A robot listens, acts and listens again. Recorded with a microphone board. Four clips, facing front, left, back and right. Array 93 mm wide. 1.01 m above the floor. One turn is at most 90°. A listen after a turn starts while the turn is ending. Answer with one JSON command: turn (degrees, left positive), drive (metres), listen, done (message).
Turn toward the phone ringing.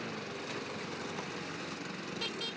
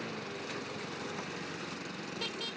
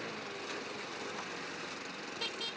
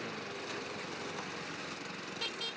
{"listen": true}
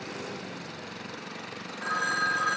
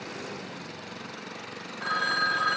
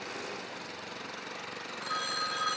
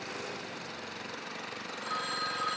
{"turn": 65}
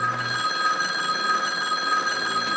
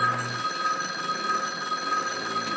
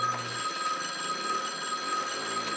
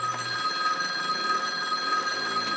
{"done": "Facing the phone ringing."}